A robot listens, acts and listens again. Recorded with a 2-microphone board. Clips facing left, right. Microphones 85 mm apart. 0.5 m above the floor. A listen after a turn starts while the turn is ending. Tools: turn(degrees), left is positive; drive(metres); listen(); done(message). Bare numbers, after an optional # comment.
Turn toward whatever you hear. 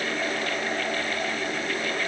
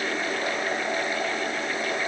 listen()
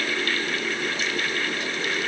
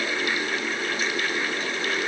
listen()
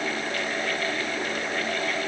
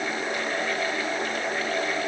done("I can't make out anything to turn to.")